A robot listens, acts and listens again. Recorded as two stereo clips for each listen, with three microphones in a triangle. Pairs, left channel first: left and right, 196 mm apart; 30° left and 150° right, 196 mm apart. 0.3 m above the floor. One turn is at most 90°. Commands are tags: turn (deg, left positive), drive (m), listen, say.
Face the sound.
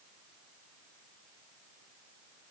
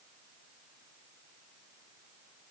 <listen/>
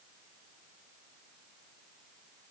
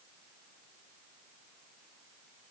<listen/>
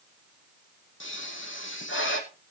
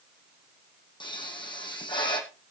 <turn deg="90"/>
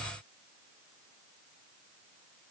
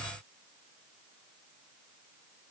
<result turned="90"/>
<say>Facing where the pop came from. I can't hear it now.</say>